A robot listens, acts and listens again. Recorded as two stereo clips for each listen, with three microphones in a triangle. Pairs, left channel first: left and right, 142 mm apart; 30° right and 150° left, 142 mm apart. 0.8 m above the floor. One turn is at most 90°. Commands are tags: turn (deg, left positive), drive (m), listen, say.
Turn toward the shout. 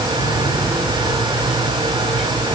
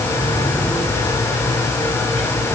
<listen/>
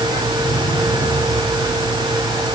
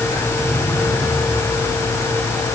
<listen/>
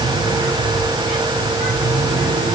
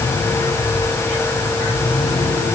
<say>I can't make out a shout.</say>